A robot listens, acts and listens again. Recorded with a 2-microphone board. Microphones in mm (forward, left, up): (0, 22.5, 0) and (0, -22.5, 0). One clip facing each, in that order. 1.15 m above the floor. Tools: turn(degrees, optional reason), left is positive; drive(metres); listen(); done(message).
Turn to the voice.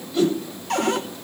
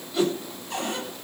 listen()
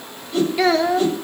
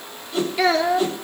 turn(degrees=30)
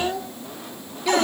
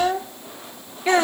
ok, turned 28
turn(degrees=-30, reason="So it is at 30° right.")
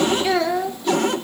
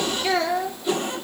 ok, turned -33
done("Found it: a child speaking, straight ahead, 1 to 2 m away.")